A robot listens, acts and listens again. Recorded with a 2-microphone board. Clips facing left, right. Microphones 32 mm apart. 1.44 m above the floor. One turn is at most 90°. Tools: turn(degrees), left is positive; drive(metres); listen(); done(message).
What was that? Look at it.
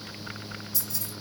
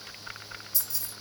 turn(degrees=30)
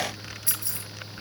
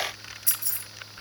turn(degrees=90)
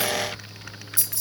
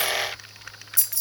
turn(degrees=25)
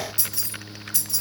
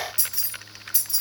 turn(degrees=-15)
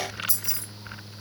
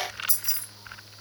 done("Found it: keys jangling, straight ahead, 1 to 2 m away.")